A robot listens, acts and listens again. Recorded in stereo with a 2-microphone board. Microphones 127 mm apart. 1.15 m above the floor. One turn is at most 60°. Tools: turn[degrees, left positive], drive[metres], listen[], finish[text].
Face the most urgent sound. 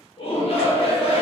Thought: The shout: about 50° left or 130° left.
Action: turn[50]
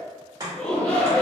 Thought: So it is at 10° left.
Action: turn[10]
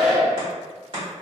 Action: finish[Found it: a shout, straight ahead.]